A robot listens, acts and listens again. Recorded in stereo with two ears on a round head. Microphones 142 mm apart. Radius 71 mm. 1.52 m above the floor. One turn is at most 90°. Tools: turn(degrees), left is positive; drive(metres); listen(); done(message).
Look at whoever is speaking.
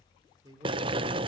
turn(degrees=-25)
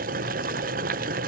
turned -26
listen()
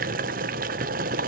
listen()
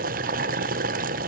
done("I heard a man speaking, but can't make it out now. It was about straight ahead or 130° right.")